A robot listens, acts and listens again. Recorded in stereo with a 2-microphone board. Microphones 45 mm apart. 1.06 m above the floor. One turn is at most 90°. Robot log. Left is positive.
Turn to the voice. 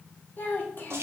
note: The child speaking: about 40° left or 140° left.
cmd yaw +40
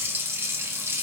cmd idle
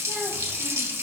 cmd idle
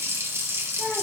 end: I heard a child speaking, but can't make it out now. It was about straight ahead or 100° left.